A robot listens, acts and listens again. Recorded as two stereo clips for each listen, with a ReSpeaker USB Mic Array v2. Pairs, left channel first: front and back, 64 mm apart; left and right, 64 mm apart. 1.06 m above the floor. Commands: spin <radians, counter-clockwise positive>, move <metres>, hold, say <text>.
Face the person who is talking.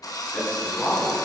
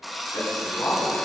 spin 1.13
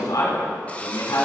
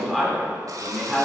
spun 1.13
say Facing the man speaking.